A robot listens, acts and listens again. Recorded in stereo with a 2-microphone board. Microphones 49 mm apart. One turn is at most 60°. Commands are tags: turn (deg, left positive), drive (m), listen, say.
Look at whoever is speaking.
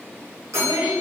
<turn deg="-40"/>
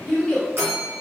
<say>Facing the child speaking, 1 to 2 m away.</say>